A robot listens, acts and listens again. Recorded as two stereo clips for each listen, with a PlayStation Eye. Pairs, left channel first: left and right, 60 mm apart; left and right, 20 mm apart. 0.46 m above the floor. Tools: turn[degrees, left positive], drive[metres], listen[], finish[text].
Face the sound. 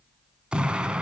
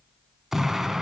Thought: The explosion: about 15° right or 165° right.
Action: turn[-15]
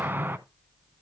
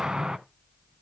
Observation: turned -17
Thought: So it is at 150° right.
Action: turn[-150]
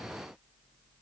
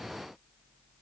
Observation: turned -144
Action: finish[I heard an explosion from this way, but can't make it out now.]